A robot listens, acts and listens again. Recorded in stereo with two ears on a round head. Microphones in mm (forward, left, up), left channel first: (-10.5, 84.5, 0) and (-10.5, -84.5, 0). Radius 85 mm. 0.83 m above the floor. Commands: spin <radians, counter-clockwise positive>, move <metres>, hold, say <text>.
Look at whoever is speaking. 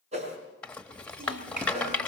spin -0.79
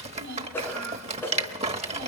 spin -1.57
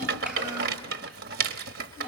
say Facing the child speaking, over 4 m away.